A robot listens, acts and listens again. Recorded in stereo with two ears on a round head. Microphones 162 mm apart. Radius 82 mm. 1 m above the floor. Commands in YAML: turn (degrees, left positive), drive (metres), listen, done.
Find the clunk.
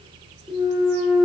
turn: 30
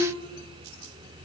listen: true
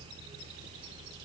done: "I heard a clunk, but can't make it out now. It was about 30° right or 150° left."